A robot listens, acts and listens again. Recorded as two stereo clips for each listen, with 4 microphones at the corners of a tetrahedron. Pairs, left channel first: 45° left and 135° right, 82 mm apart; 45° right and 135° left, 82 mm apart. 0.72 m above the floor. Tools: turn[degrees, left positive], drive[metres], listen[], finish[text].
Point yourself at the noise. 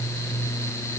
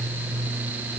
Action: listen[]
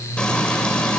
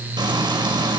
Thought: The frying: 125° left.
Action: turn[125]
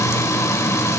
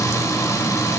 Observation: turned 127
Action: finish[Found it: frying, straight ahead, over 4 m away.]